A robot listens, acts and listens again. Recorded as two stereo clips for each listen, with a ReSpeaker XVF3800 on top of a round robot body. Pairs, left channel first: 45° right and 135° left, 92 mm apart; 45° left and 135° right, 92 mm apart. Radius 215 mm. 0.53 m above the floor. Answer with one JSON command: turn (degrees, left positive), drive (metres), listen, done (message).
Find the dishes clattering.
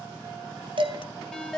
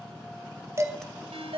{"turn": 165}
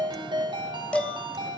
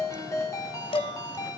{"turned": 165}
{"turn": 35}
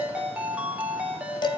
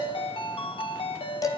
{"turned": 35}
{"done": "Facing the dishes clattering, 2 to 4 m away."}